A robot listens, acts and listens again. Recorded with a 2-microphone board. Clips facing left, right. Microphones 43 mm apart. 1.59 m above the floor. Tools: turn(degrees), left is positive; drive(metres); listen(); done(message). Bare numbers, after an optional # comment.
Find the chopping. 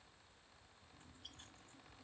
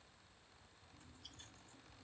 listen()
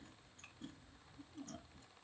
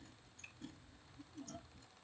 listen()
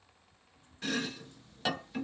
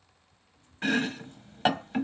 # The chopping: about 35° right or 145° right.
turn(-35)
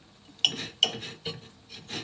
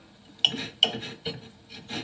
# So it is at 10° right.
turn(-10)
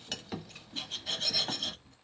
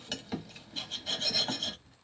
done("Found it: chopping, straight ahead.")